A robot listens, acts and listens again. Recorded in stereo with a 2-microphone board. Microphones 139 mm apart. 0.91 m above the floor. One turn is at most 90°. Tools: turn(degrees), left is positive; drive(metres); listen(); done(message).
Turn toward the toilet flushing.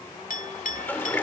turn(degrees=30)
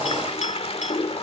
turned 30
turn(degrees=90)
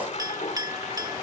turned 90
turn(degrees=55)
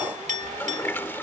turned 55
turn(degrees=15)
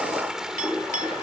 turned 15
done("Facing the toilet flushing.")